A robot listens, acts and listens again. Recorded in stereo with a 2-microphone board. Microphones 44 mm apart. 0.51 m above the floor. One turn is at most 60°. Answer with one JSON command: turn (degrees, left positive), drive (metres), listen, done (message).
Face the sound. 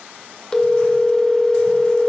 {"turn": 20}
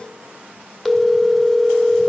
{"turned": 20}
{"done": "Facing the phone ringing."}